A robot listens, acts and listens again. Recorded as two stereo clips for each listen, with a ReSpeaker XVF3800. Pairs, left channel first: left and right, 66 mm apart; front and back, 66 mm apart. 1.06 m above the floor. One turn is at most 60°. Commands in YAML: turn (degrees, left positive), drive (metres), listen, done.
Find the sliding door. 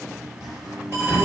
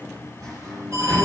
turn: -60
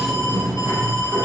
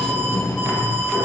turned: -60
turn: -60
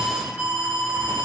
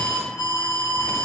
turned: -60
turn: -50
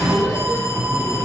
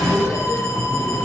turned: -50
done: "Facing the sliding door."